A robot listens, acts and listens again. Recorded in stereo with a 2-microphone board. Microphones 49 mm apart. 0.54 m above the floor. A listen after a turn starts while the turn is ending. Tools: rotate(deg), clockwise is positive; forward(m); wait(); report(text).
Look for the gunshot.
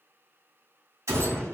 rotate(90)
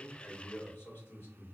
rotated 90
report("I heard a gunshot from this way, but can't make it out now.")